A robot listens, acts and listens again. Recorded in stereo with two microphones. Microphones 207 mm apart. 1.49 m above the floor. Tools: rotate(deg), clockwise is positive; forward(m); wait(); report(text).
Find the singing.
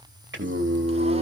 rotate(60)
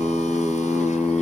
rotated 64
rotate(-10)
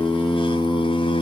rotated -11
rotate(-30)
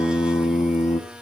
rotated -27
rotate(-30)
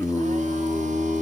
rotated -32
rotate(-20)
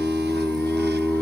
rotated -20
report("Found it: singing, straight ahead.")